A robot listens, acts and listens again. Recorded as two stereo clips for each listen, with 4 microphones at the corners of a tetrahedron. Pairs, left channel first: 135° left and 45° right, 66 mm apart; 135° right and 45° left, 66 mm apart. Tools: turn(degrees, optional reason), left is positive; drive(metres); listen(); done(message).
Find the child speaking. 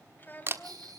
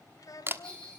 turn(degrees=-160, reason="The child speaking: 160° right.")
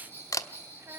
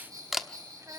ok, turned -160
listen()
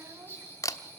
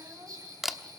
listen()
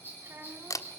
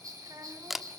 turn(degrees=10, reason="The child speaking is now 10° left.")
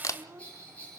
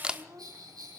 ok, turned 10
done("Facing the child speaking, 2 to 4 m away.")